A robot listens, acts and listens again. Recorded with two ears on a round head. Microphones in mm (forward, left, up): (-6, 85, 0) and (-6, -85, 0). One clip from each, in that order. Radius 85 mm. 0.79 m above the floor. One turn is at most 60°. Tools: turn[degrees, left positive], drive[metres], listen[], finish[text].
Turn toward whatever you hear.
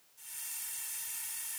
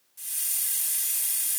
Action: turn[-60]
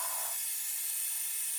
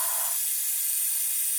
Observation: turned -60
Thought: So it is at 35° right.
Action: turn[-35]
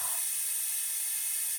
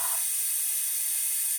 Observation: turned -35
Thought: The hiss is now 20° right.
Action: turn[-20]
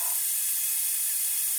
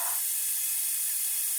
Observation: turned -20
Action: finish[Facing the hiss.]